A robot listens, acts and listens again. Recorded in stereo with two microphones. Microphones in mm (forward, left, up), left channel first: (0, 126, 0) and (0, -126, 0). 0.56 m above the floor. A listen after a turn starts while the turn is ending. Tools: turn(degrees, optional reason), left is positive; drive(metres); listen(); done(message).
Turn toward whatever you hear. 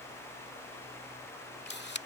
turn(degrees=45, reason="The camera shutter: about 45° left or 135° left.")
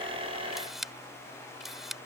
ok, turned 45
done("Found it: a camera shutter, straight ahead.")